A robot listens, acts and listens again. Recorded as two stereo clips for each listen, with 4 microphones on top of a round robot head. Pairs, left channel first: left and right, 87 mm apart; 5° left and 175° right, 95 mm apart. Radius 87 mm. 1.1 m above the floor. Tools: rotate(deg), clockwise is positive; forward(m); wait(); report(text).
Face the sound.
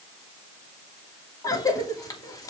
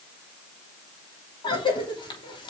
rotate(-40)
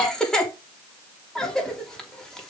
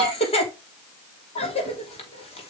report("Found it: a cough, straight ahead, 2 to 4 m away.")